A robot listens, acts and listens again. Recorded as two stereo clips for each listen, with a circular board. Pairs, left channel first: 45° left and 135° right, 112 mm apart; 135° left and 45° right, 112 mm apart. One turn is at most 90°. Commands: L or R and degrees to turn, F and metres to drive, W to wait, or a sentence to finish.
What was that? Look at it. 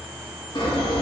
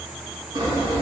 Facing the sawing, 2 to 4 m away.